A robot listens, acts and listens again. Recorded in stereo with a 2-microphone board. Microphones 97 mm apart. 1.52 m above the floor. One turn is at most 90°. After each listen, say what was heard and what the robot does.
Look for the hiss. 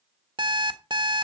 Keep listening.
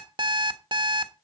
Keep listening.
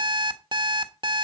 I can't make out a hiss to turn to.